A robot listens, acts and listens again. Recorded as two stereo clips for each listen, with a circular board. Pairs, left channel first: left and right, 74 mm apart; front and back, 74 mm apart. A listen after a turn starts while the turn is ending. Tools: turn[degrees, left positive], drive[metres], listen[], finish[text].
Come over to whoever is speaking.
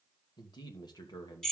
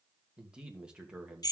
Thought: The man speaking: 105° left.
Action: turn[105]
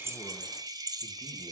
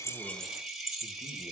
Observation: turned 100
Action: listen[]
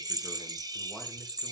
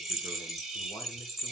Action: listen[]
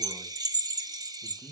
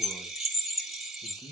Action: drive[1.0]
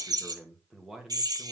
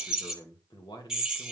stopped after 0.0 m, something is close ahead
Action: finish[Something is in my way. I am facing the man speaking but have not reached it.]